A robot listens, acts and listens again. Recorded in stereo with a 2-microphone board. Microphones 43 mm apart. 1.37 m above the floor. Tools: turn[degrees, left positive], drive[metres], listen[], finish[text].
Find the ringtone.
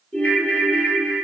Thought: The ringtone: about 30° left or 150° left.
Action: turn[30]
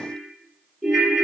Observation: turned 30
Action: finish[Found it: a ringtone, straight ahead.]